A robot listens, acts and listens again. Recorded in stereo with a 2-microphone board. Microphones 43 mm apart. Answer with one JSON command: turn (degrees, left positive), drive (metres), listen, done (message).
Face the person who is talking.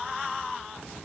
{"listen": true}
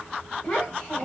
{"turn": 35}
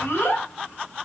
{"turn": 110}
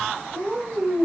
{"turn": -10}
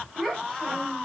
{"done": "Found it: a child speaking, straight ahead, 1 to 2 m away."}